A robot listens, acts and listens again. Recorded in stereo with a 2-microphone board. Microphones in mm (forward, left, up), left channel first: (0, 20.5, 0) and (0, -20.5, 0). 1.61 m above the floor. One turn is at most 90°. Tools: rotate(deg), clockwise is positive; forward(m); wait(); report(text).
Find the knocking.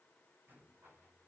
wait()
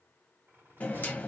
rotate(-40)
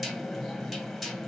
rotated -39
report("Facing the knocking.")